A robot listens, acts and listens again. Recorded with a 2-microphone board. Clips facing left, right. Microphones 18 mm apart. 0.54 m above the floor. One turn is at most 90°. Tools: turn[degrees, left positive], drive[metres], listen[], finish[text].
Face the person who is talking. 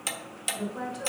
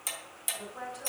Thought: The woman speaking: about 25° left or 155° left.
Action: turn[25]
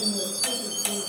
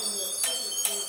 Action: listen[]
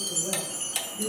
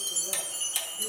Thought: So it is at 130° left.
Action: turn[90]
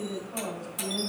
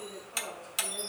Thought: The woman speaking is now 35° left.
Action: turn[35]
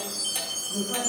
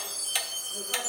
Thought: The woman speaking is now 10° left.
Action: turn[10]
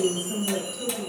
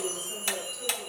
Action: finish[Found it: a woman speaking, straight ahead, 2 to 4 m away.]